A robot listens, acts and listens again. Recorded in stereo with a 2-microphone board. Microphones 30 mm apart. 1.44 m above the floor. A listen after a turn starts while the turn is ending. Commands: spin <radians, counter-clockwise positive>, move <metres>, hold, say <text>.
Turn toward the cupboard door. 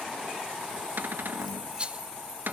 spin -1.57
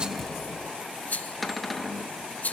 say Facing the cupboard door, 1 to 2 m away.